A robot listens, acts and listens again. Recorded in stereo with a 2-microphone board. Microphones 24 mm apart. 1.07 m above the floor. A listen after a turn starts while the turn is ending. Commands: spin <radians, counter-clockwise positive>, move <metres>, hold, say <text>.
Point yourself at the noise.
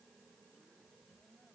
hold
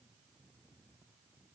hold
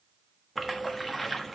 spin 0.52
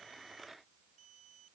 hold
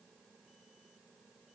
say I heard a splash, but can't make it out now. It was about 20° right or 140° left.